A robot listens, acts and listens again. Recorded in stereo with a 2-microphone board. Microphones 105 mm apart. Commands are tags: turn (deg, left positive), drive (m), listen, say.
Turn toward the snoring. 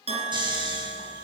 <turn deg="-45"/>
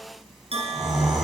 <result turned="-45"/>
<say>Found it: snoring, straight ahead, 2 to 4 m away.</say>